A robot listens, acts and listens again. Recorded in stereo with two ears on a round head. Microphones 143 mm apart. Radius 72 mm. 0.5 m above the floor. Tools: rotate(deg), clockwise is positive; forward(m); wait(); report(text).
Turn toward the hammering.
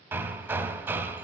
rotate(30)
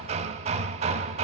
rotate(135)
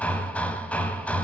rotate(-10)
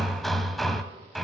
report("Found it: hammering, straight ahead.")